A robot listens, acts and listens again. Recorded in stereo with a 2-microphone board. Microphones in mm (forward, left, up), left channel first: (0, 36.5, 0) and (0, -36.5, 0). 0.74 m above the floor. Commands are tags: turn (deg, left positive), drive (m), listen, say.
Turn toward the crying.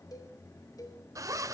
<listen/>
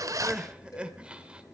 <turn deg="-30"/>
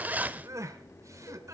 <turn deg="-135"/>
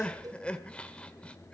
<turn deg="15"/>
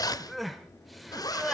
<say>Found it: crying, straight ahead.</say>